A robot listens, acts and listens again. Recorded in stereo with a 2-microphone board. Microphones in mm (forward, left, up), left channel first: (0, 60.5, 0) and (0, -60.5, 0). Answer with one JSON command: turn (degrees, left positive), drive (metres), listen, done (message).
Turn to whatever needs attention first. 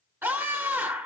{"turn": -15}
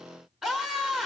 {"done": "Found it: a scream, straight ahead, over 4 m away."}